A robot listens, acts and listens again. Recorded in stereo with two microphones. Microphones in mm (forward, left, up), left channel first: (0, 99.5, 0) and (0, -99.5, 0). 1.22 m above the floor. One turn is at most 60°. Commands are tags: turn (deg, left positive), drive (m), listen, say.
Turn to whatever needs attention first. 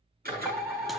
<turn deg="-30"/>
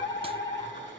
<turn deg="20"/>
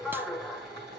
<say>Found it: a fire alarm, straight ahead.</say>